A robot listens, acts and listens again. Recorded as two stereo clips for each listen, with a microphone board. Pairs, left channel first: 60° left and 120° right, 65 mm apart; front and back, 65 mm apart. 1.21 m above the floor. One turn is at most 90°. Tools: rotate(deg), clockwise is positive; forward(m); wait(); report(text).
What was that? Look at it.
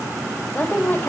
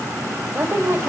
rotate(-90)
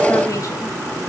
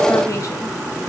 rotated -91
rotate(-30)
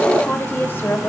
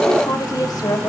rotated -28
report("Found it: a woman speaking, straight ahead.")